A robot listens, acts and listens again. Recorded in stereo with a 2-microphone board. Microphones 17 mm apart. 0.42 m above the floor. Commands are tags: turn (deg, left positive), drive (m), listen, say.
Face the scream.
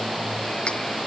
<listen/>
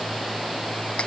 <listen/>
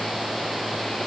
<say>I can't make out a scream.</say>